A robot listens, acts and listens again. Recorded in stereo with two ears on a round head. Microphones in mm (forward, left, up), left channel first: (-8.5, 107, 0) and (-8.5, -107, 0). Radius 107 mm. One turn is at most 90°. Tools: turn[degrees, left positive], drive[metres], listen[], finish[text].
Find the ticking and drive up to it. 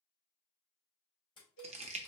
Thought: The ticking: about 20° left or 160° left.
Action: turn[20]
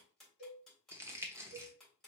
Action: drive[1.0]
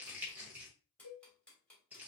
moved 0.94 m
Action: drive[1.0]
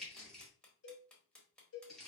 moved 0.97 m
Action: drive[1.0]
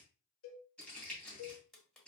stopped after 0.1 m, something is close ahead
Action: finish[I am next to the ticking.]